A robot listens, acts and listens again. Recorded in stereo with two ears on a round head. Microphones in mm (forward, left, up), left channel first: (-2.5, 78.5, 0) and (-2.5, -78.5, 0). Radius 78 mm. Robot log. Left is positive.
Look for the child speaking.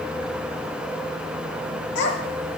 cmd yaw +90
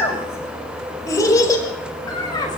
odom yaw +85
note: So it is at 25° left.
cmd yaw +25
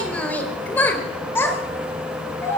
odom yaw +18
note: The child speaking is now 15° left.
cmd yaw +15
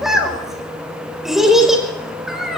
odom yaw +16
end: Facing the child speaking.